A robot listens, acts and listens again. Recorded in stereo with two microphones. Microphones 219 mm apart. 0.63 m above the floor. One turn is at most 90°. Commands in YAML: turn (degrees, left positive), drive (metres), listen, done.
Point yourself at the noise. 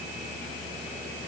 listen: true
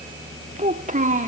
turn: -35
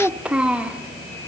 done: "Found it: a child speaking, straight ahead, 1 to 2 m away."